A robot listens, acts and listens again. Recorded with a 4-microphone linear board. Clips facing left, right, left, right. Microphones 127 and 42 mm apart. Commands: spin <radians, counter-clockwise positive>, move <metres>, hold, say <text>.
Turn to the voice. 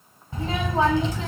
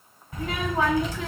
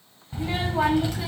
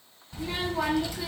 spin 0.52
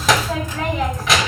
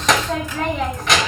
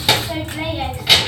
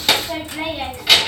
say Found it: a child speaking, straight ahead.